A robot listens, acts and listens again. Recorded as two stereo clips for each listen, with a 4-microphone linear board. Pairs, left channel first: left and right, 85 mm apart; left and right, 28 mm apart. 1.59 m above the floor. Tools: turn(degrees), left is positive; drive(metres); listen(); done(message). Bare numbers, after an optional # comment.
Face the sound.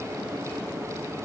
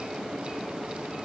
listen()
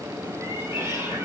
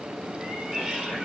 # The cat meowing: about 25° right or 155° right.
turn(-25)
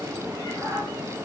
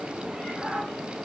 # The cat meowing: about 40° right or 140° right.
turn(-40)
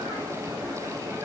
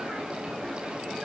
listen()
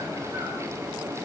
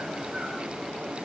listen()
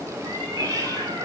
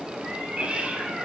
# So it is at 130° right.
turn(-130)
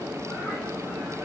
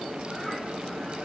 listen()
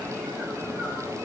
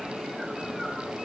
listen()
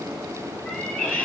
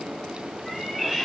# The cat meowing is now 15° left.
turn(15)
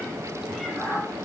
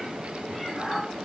done("Found it: a cat meowing, straight ahead, over 4 m away.")